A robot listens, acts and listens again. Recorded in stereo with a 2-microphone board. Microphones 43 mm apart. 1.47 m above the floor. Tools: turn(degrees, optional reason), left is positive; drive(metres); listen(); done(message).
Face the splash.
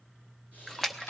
turn(degrees=30)
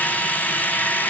listen()
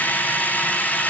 done("I heard a splash, but can't make it out now. It was about 20° right or 140° left.")